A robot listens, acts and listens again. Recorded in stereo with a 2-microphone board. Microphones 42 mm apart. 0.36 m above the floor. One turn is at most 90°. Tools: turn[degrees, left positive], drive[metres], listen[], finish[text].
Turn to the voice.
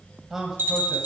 Action: turn[-30]
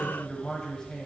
Thought: So it is at 20° left.
Action: turn[20]
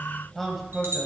Action: finish[Found it: a man speaking, straight ahead.]